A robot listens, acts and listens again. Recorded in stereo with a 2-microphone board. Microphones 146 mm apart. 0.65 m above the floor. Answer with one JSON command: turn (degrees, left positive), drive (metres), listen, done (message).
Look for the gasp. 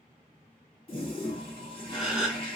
{"turn": -30}
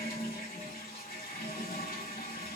{"listen": true}
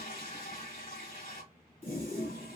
{"done": "I heard a gasp, but can't make it out now. It was about 25° left or 145° right."}